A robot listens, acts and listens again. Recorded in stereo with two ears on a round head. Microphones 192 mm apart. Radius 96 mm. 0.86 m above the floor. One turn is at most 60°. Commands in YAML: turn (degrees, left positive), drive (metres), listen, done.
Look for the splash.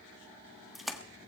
turn: 30
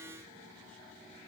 listen: true
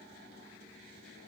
done: "I heard a splash, but can't make it out now. It was about 30° right or 150° left."